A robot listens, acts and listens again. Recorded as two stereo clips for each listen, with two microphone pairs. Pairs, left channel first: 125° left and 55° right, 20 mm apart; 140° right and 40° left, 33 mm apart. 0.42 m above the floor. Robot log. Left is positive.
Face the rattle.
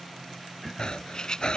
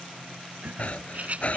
note: The rattle: 80° left.
cmd yaw +80
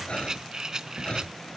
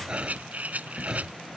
end: Found it: a rattle, straight ahead.